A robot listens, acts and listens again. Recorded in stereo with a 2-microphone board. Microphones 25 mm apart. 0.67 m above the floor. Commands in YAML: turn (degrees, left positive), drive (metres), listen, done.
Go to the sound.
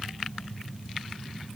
listen: true
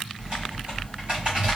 turn: -45
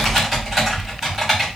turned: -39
turn: -15
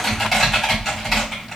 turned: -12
drive: 1.0
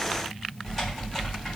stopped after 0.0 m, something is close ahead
done: "Something is in my way. I am facing the typing on a keyboard but have not reached it."